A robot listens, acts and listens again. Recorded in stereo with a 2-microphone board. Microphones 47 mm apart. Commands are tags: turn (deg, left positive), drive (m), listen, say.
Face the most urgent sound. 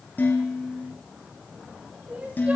<turn deg="-25"/>
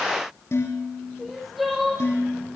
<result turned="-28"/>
<say>Facing the crying.</say>